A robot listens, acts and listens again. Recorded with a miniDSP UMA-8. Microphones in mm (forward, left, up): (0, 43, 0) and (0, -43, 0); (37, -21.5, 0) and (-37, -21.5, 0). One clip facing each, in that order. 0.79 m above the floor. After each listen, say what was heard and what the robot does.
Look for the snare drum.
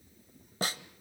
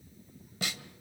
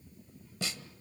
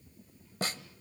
The snare drum: 140° left. Turn 140° left.
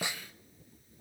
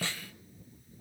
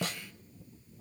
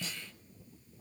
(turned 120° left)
The snare drum is now 15° left. Turn 15° left.
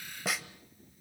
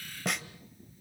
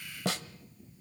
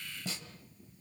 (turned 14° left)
Found it: a snare drum, straight ahead, 1 to 2 m away.